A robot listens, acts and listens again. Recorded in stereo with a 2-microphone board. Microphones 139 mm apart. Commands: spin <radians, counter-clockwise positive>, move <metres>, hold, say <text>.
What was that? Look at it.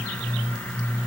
hold
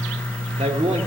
spin -0.96
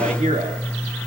spin -1.13
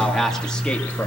say Facing the man speaking, 1 to 2 m away.